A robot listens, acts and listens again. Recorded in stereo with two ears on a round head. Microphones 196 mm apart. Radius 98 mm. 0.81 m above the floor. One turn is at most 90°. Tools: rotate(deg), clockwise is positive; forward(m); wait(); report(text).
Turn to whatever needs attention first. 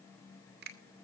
wait()
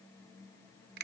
wait()
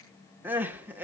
rotate(30)
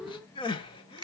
rotate(-25)
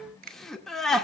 report("Found it: crying, straight ahead.")